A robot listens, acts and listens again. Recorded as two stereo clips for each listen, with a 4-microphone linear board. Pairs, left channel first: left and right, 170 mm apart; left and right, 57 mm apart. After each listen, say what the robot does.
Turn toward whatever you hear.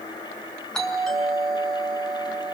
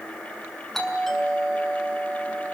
Turn 30° left.
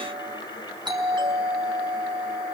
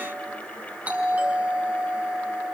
Turn 25° right.
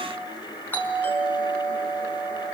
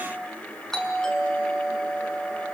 Turn 10° left.
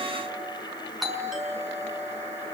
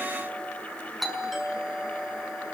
Facing the doorbell.